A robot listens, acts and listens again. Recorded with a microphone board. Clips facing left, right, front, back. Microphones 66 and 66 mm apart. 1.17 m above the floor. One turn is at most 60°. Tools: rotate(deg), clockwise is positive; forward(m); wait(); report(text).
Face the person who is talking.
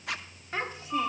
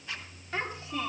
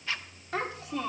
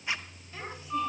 rotate(-20)
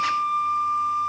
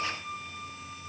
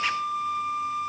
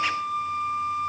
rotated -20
wait()
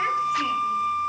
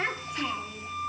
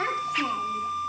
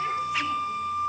wait()
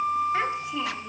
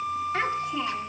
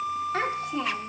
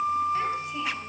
report("Facing where the child speaking came from. I can't hear it now.")